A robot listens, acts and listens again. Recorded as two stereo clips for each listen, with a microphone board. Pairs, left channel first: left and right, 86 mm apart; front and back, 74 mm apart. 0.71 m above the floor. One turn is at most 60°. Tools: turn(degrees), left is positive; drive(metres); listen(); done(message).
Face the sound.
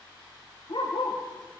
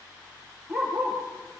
turn(degrees=60)
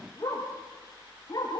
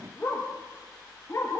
turn(degrees=45)
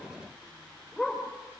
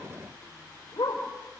done("Found it: a dog barking, straight ahead.")